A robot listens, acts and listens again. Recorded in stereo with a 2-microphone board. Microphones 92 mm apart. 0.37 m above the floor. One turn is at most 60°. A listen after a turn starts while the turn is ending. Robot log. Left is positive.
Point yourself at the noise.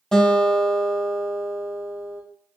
cmd yaw +30
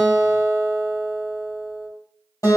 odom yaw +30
note: So it is at 140° left.
cmd yaw +60
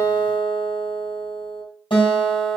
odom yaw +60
note: The guitar is now 95° left.
cmd yaw +60
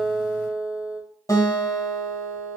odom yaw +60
note: The guitar is now 40° left.
cmd yaw +40
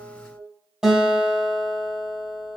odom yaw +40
note: The guitar is now 10° right.
cmd yaw -10
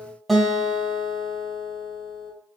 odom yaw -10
end: Facing the guitar.